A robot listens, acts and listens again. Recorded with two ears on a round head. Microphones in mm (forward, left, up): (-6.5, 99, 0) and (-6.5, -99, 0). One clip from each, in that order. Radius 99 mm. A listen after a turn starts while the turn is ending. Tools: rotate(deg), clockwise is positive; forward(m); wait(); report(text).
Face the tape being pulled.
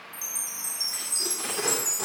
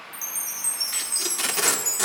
rotate(65)
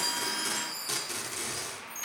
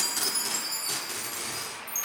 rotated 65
report("Facing the tape being pulled, 2 to 4 m away.")